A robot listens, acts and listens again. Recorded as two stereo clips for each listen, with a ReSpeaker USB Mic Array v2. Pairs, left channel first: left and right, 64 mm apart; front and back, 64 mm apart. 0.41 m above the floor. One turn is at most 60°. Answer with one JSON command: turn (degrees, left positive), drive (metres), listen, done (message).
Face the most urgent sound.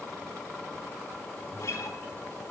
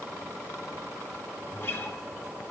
{"listen": true}
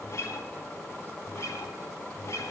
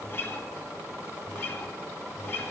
{"listen": true}
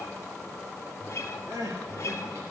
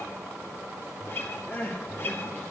{"turn": -60}
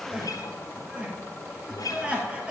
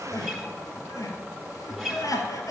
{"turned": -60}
{"turn": -20}
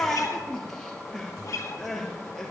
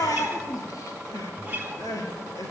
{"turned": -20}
{"done": "Found it: crying, straight ahead."}